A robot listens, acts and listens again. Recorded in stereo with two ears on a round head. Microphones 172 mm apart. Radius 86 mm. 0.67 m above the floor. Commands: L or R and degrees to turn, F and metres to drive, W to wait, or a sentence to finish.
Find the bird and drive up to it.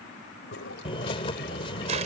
L30
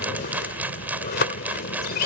L120
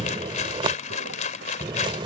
R25
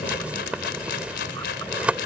F1.0
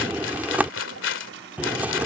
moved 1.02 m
R10
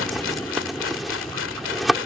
F1.0
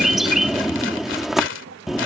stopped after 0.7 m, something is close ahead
Arrived at the bird, straight ahead.